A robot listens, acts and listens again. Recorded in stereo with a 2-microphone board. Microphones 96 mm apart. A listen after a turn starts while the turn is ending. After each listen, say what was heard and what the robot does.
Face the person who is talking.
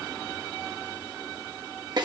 Keep listening.
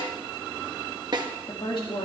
The woman speaking: about 60° left or 120° left. Turn 60° left.
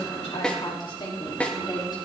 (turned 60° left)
So it is at 50° left. Turn 50° left.
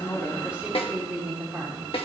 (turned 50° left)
The woman speaking is now 15° right. Turn 15° right.
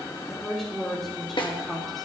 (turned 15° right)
Facing the woman speaking, 2 to 4 m away.